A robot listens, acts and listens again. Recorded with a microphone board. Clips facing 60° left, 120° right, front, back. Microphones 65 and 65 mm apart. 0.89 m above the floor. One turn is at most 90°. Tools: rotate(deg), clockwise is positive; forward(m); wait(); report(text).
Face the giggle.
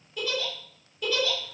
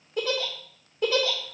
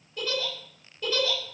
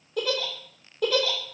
rotate(90)
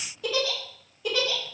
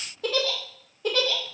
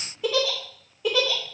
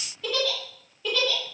rotate(75)
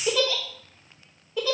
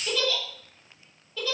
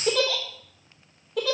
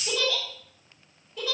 rotate(10)
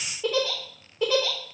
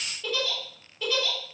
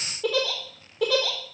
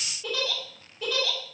report("Facing the giggle, 2 to 4 m away.")